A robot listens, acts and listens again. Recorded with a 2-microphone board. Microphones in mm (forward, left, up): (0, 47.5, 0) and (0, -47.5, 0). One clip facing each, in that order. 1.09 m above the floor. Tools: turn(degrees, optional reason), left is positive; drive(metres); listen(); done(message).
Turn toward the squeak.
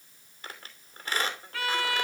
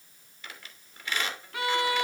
turn(degrees=40, reason="The squeak: about 40° left or 140° left.")
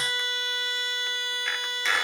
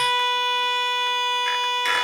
listen()
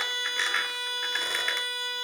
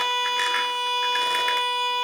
listen()
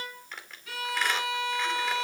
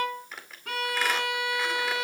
done("Facing the squeak, 2 to 4 m away.")